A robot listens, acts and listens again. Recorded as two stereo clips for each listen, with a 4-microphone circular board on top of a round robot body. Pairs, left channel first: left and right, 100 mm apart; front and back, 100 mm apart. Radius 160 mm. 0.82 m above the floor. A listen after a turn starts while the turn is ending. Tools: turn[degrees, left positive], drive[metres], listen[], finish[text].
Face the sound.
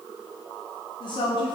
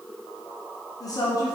Thought: The woman speaking: 55° left.
Action: turn[55]
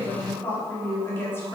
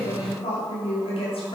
Thought: The woman speaking is now 25° left.
Action: turn[25]
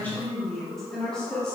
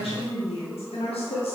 Thought: The woman speaking is now 10° left.
Action: turn[10]
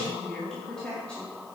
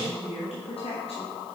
Thought: The woman speaking is now 10° left.
Action: turn[10]
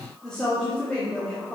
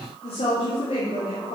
Thought: The woman speaking is now 10° left.
Action: turn[10]
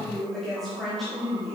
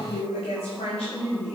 Action: finish[Facing the woman speaking, 1 to 2 m away.]